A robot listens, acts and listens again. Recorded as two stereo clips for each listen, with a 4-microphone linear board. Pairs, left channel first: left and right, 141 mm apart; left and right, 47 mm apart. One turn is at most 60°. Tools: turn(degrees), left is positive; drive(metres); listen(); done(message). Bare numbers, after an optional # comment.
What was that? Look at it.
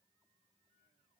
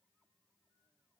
listen()
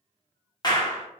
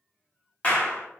# The clap: about 30° left or 150° left.
turn(30)
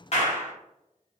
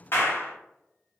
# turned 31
# So it is at 115° left.
turn(60)
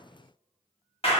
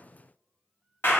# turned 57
# The clap is now 55° left.
turn(55)
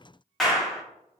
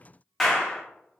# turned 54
done("Found it: a clap, straight ahead.")